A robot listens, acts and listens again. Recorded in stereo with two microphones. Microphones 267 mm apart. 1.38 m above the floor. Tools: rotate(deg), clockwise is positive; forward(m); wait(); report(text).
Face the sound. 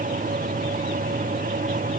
wait()
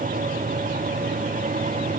wait()
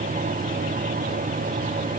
report("I can't make out anything to turn to.")